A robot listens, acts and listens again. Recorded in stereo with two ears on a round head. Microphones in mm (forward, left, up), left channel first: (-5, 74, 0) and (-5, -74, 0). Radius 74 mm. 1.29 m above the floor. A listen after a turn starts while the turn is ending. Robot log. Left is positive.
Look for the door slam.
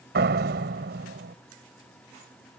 note: The door slam: about 70° right or 110° right.
cmd yaw -70
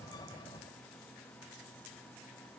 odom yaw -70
cmd idle
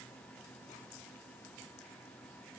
end: I heard a door slam, but can't make it out now. It was about straight ahead or 40° right.